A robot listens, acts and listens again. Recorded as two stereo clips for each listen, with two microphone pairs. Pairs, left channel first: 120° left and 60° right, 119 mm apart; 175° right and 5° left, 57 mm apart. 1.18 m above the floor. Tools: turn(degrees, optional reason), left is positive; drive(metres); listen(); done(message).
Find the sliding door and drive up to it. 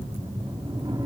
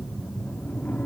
turn(degrees=-110, reason="The sliding door: 110° right.")
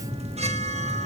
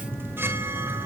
listen()
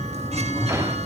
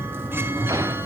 drive(metres=1.0)
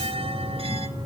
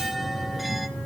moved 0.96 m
listen()
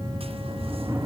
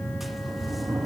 turn(degrees=10, reason="The sliding door is now 10° left.")
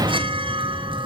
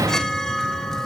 drive(metres=1.0)
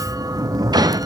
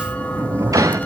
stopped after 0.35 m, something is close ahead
done("I am next to the sliding door.")